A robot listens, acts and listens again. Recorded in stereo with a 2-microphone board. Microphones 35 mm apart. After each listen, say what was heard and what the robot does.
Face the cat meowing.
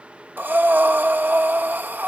Keep listening.
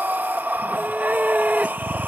The cat meowing: about 35° right or 145° right. Turn 35° right.
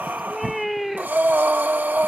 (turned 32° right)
Found it: a cat meowing, straight ahead.